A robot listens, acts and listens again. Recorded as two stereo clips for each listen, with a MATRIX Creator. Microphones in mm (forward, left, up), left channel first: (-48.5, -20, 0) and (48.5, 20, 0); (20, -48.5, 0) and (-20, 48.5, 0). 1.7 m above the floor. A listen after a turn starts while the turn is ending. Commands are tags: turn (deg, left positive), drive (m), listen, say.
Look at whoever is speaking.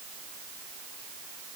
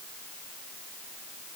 <listen/>
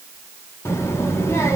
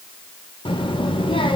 <turn deg="-95"/>
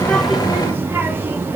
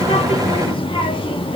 <turn deg="-45"/>
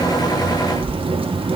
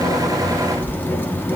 <say>Facing the child speaking.</say>